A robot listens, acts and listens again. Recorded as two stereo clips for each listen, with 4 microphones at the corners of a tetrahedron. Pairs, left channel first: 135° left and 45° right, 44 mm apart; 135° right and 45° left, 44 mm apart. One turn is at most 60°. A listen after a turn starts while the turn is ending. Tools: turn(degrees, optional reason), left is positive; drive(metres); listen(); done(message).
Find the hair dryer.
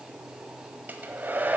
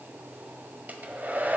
done("Found it: a hair dryer, straight ahead.")